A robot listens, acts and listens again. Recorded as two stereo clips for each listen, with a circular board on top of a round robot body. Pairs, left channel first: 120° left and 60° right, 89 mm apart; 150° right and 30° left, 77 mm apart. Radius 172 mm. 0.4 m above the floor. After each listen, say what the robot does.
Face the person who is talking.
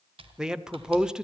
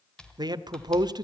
Turn 20° left.
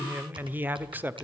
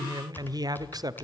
Facing the man speaking.